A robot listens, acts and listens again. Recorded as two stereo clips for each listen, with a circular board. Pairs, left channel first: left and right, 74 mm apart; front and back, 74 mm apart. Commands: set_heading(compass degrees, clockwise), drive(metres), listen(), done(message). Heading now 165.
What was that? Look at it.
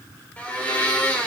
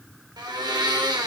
set_heading(0)
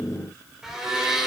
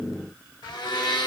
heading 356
done("Facing the blender, 2 to 4 m away.")